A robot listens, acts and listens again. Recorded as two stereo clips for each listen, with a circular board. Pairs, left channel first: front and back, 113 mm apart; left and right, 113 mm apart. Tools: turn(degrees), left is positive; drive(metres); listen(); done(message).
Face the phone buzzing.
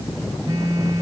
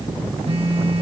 turn(degrees=-120)
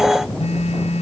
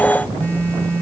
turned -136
turn(degrees=15)
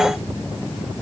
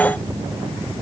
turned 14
listen()
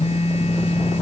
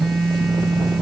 done("Found it: a phone buzzing, straight ahead.")